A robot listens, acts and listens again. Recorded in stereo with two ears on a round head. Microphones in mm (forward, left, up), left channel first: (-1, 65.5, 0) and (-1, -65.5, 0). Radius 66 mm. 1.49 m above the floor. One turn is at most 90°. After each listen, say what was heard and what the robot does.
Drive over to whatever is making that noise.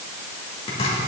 The chopping: about 45° left or 135° left. Turn 45° left.
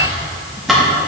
Drive 1.0 m forward.
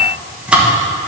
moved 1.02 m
The chopping is now 10° right. Turn 10° right.
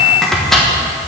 Drive 1.0 m forward.
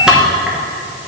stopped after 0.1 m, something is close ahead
I am next to the chopping.